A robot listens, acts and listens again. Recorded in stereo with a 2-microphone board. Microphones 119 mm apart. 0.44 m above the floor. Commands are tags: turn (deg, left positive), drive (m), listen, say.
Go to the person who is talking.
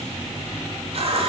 <listen/>
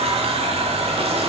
<listen/>
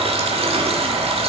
<say>I can't make out anyone speaking to turn to.</say>